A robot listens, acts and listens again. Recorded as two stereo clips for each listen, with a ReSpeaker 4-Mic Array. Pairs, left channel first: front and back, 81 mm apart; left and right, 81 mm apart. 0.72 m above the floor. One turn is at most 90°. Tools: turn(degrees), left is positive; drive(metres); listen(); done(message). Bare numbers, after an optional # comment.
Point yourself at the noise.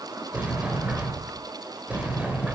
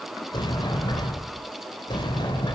# The sliding door: 110° left.
turn(90)
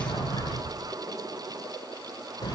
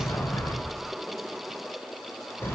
# The sliding door is now 30° left.
turn(30)
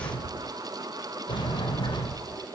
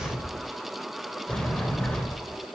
# The sliding door is now 10° left.
turn(10)
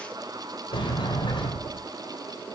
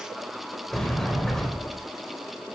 done("Found it: a sliding door, straight ahead.")